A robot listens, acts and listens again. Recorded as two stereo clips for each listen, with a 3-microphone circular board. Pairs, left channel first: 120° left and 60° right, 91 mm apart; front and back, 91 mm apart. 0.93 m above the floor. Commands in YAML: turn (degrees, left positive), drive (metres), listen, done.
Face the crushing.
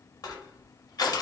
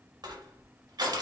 turn: 155
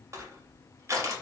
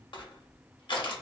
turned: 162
turn: -10
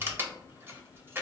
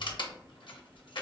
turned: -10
done: "Found it: crushing, straight ahead, under 1 m away."